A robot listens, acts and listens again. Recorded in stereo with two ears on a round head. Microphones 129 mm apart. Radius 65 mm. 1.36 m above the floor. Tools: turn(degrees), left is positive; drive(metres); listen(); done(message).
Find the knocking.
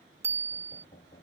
turn(degrees=55)
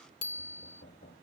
turn(degrees=70)
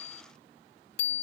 listen()
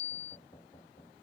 turn(degrees=30)
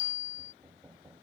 turn(degrees=-10)
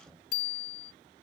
done("Found it: knocking, straight ahead.")